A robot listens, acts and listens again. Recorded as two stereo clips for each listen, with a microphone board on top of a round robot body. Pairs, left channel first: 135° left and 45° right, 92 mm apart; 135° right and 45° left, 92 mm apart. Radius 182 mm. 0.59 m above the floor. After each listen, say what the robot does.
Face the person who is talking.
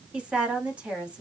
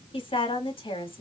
Turn 120° right.
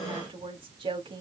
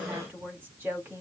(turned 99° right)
Turn 25° right.
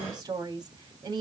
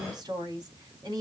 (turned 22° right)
Found it: a woman speaking, straight ahead.